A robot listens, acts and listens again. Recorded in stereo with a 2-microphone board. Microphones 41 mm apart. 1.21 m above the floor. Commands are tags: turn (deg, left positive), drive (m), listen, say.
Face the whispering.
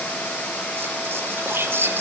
<turn deg="-60"/>
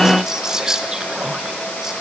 <turn deg="-15"/>
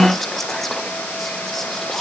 <say>Found it: whispering, straight ahead.</say>